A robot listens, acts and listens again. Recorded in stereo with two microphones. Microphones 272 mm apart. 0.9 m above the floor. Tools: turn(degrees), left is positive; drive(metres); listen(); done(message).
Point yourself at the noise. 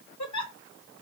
turn(degrees=90)
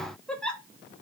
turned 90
done("Facing the giggle.")